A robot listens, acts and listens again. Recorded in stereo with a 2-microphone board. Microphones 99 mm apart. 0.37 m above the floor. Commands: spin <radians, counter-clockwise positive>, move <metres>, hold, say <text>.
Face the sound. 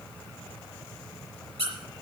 spin -1.57
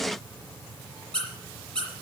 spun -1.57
spin 0.17
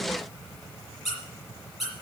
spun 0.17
say Facing the squeak.